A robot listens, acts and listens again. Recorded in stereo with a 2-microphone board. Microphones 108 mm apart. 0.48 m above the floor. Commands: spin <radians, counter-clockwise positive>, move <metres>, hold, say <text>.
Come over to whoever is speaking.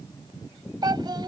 spin -0.79
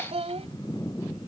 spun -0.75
spin -1.57
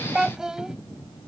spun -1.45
move 1.0
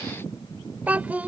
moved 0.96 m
spin -0.26
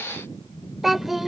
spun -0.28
move 1.0
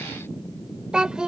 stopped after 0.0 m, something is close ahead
spin -0.17
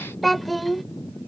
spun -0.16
say Arrived at the child speaking, straight ahead.